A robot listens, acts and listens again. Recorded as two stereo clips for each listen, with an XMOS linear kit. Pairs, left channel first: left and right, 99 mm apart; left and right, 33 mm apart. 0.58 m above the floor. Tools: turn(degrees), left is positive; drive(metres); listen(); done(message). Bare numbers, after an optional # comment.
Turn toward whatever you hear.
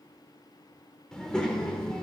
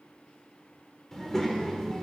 turn(30)
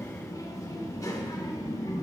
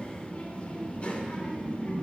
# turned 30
# So it is at 140° left.
turn(140)
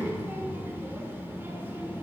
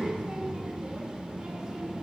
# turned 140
# The child speaking is now 25° right.
turn(-25)
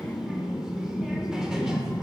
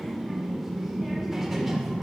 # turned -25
# The child speaking is now 10° right.
turn(-10)
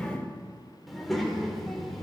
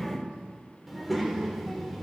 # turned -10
done("Facing the child speaking, 1 to 2 m away.")